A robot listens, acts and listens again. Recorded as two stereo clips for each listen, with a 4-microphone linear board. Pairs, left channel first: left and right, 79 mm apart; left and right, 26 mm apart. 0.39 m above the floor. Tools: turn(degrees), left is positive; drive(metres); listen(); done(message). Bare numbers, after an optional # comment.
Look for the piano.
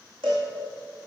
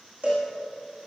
listen()
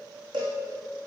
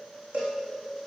listen()
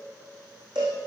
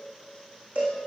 done("I can't make out a piano, only a cowbell.")